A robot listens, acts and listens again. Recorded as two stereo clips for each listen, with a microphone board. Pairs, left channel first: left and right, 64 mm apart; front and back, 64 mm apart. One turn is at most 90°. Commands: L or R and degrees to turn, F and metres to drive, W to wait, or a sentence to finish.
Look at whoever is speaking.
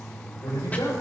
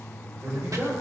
L90
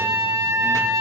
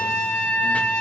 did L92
L35
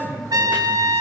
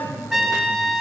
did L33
Found it: a man speaking, straight ahead.